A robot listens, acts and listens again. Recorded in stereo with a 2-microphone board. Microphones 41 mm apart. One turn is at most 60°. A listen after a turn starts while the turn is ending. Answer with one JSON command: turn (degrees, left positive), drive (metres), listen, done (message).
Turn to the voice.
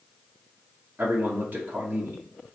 {"turn": -50}
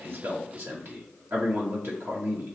{"turn": -60}
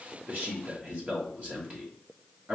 {"turn": -35}
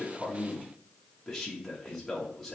{"done": "Facing the man speaking, 1 to 2 m away."}